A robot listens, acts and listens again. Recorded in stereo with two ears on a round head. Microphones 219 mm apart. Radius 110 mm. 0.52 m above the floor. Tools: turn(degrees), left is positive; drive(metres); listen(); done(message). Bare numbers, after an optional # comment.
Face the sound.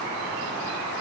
listen()
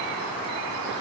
listen()
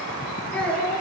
turn(30)
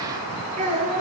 # So it is at 30° right.
turn(-30)
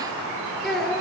done("Facing the child speaking.")